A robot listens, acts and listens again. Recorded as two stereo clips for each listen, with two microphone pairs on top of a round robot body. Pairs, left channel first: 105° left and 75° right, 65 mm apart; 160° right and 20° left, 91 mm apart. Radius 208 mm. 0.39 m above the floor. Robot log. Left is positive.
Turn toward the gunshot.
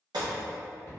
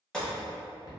note: The gunshot: 75° right.
cmd yaw -75
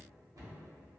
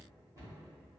end: Facing where the gunshot came from. I can't hear it now.